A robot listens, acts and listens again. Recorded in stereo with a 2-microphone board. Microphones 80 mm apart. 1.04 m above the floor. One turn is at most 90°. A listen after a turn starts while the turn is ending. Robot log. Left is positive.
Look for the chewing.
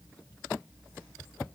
cmd idle
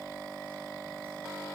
cmd idle
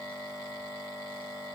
end: I can't make out chewing to turn to.